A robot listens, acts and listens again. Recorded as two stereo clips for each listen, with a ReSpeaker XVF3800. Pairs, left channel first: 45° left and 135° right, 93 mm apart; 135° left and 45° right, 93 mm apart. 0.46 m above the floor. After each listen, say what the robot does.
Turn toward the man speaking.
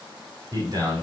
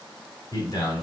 Turn 180° left.
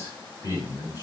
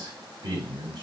Facing the man speaking, 2 to 4 m away.